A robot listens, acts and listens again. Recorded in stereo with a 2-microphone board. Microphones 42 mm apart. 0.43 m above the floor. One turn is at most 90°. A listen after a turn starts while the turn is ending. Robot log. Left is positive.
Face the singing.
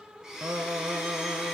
cmd yaw -90
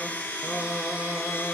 note: So it is at 30° left.
cmd yaw +30
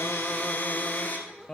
note: The singing is now 15° left.
cmd yaw +15
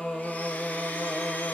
note: The singing is now 15° left.
cmd yaw +15
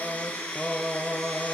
end: Found it: singing, straight ahead, 2 to 4 m away.